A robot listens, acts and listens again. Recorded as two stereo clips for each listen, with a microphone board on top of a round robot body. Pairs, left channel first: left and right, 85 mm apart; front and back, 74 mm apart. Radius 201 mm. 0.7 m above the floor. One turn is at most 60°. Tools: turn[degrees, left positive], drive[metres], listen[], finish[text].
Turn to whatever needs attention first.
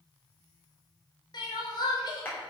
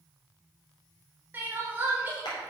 Thought: The crying: 115° left.
Action: turn[60]
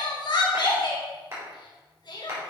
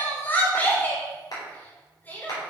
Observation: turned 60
Thought: The crying is now 65° left.
Action: turn[60]
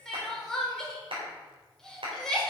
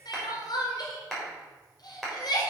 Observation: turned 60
Action: finish[Facing the crying.]